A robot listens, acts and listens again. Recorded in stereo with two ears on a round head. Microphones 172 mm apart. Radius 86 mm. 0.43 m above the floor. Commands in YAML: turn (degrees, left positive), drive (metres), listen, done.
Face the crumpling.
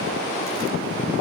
listen: true
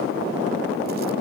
listen: true
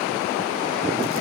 done: "I can't make out crumpling to turn to."